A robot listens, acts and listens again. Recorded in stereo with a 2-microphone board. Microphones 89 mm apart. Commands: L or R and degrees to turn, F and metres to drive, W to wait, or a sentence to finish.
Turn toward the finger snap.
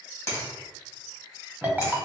L30
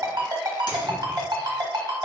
W
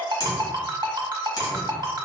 L115
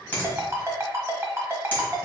L25
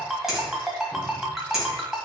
W
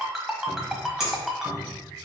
Found it: a finger snap, straight ahead.